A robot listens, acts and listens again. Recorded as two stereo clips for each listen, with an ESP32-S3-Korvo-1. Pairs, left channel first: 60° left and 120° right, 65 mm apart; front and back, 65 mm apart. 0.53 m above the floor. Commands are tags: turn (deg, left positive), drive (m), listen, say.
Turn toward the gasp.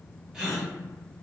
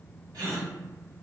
<turn deg="160"/>
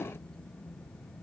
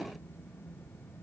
<say>I heard a gasp from this way, but can't make it out now.</say>